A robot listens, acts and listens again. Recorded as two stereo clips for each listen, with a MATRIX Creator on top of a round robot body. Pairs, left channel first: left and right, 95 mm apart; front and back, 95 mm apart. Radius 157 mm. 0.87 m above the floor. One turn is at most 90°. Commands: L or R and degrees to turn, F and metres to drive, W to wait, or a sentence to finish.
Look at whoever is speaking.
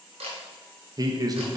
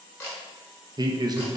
R90
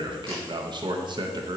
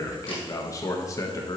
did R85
R55
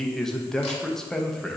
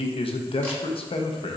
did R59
Facing the man speaking, under 1 m away.